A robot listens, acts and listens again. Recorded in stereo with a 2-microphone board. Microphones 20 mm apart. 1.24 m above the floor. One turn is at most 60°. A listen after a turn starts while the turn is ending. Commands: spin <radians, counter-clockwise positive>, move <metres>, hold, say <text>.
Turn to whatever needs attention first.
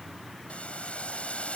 hold
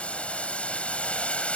hold
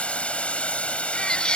spin 0.79
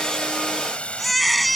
say Facing the baby crying.